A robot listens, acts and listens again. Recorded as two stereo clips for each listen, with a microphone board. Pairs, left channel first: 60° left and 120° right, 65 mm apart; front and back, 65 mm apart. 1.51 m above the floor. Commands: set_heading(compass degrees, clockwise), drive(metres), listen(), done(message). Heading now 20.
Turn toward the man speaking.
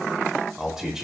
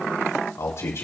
set_heading(60)
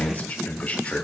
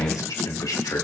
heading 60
done("Found it: a man speaking, straight ahead, 2 to 4 m away.")